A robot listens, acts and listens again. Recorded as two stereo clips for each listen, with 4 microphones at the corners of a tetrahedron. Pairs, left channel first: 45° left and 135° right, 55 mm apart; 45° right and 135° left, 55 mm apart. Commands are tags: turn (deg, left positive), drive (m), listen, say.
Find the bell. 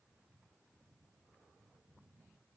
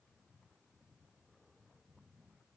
<listen/>
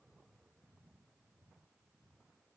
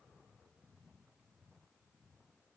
<listen/>
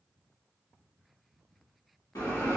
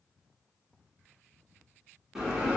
<turn deg="55"/>
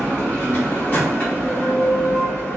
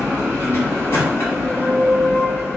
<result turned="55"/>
<turn deg="-15"/>
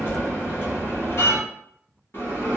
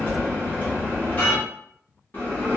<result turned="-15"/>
<say>Facing the bell.</say>